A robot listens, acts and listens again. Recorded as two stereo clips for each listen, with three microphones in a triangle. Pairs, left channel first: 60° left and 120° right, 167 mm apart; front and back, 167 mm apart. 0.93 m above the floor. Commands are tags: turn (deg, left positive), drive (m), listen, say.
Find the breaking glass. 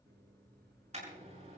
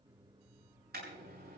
<listen/>
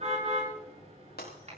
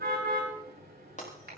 <turn deg="40"/>
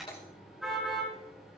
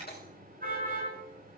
<say>Facing where the breaking glass came from. I can't hear it now.</say>